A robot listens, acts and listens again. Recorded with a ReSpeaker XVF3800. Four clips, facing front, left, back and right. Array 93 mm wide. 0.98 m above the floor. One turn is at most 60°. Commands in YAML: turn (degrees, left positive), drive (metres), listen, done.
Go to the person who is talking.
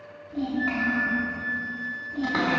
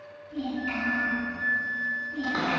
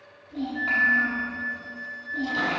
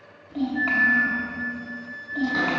turn: -60
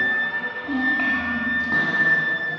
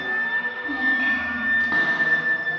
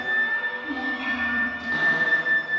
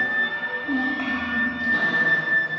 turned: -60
turn: -20
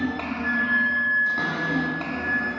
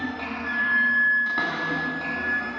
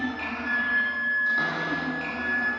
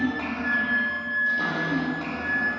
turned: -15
drive: 1.0
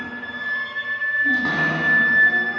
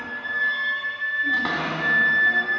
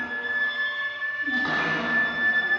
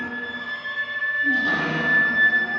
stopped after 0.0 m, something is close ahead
listen: true
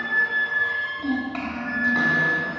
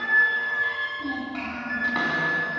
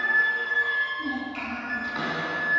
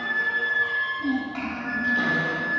done: "Something is in my way. I am facing the child speaking but have not reached it."